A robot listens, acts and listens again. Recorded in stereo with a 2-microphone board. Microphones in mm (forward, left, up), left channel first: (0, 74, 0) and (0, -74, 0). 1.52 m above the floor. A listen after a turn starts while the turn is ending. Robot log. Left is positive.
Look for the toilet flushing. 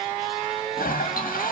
note: The toilet flushing: about 70° left or 110° left.
cmd yaw +70
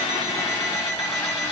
cmd idle
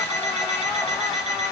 cmd idle
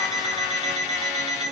end: I heard a toilet flushing, but can't make it out now. It was about straight ahead or 40° left.